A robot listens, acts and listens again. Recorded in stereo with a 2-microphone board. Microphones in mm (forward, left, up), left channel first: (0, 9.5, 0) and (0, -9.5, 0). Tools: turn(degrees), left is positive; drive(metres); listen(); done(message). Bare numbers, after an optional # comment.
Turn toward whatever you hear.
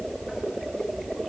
listen()
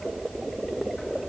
listen()
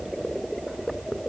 done("I can't make out anything to turn to.")